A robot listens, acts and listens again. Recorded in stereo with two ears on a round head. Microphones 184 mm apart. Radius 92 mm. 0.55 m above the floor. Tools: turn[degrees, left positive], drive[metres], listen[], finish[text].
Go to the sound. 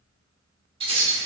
Thought: The keys jangling: about 30° right or 150° right.
Action: turn[-30]
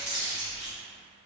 Action: drive[1.0]
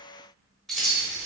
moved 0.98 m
Action: drive[1.0]
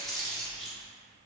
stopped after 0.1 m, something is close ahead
Action: finish[Arrived at the keys jangling, straight ahead.]